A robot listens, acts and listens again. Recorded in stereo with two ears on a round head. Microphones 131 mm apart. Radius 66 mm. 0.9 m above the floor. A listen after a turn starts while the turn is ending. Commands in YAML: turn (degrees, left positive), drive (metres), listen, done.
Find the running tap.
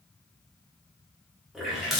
turn: -30
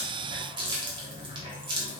turn: -150
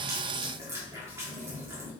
turn: -15
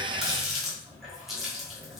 done: "Facing the running tap."